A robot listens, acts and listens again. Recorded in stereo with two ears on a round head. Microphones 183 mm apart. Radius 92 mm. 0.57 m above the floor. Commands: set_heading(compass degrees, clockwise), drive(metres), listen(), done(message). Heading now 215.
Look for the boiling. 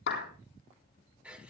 listen()
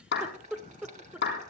set_heading(255)
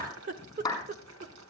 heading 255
set_heading(355)
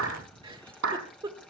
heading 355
done("Found it: boiling, straight ahead, 2 to 4 m away.")